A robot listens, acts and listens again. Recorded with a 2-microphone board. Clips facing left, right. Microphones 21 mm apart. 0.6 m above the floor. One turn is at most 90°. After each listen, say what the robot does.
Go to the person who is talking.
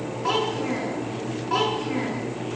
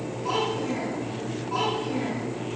Turn 65° left.
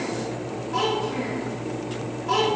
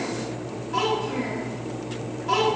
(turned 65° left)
Drive 1.0 m forward.
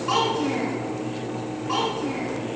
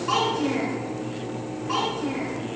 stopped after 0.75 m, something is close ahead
Blocked. The child speaking is further on, straight ahead.